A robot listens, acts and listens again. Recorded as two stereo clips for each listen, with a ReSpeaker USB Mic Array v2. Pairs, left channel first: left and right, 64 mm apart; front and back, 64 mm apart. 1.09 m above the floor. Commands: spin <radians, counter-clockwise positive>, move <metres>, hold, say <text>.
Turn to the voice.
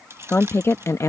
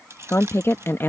spin 0.87
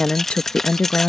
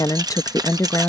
spin 0.61
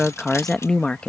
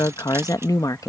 spin 0.35
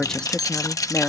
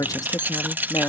spin 0.35
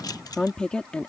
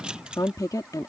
spin 0.26
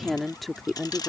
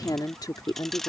say Found it: a woman speaking, straight ahead.